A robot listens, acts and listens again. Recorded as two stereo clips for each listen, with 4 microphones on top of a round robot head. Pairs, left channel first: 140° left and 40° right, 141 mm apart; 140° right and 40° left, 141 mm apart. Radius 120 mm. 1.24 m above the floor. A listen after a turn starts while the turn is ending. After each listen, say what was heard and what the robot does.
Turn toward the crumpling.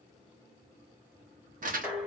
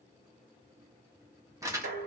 The crumpling: 25° right. Turn 25° right.
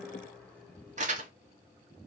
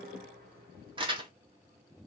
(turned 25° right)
The crumpling is now 10° right. Turn 10° right.
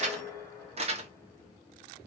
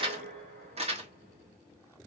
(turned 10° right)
Facing the crumpling, 1 to 2 m away.